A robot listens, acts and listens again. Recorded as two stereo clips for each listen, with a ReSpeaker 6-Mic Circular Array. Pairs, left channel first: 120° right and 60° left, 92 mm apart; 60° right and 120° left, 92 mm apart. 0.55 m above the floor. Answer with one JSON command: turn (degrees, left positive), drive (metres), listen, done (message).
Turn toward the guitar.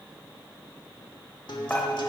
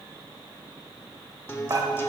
{"turn": -120}
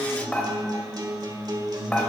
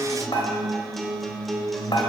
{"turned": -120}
{"turn": 30}
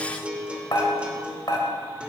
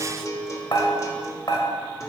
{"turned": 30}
{"turn": -15}
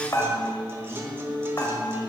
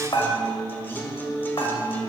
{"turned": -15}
{"done": "Facing the guitar."}